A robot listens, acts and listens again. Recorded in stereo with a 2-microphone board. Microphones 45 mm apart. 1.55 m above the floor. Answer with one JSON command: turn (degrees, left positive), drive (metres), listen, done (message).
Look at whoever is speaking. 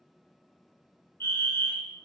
{"listen": true}
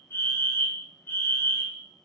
{"listen": true}
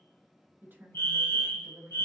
{"turn": -50}
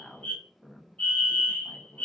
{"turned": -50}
{"done": "Found it: a woman speaking, straight ahead."}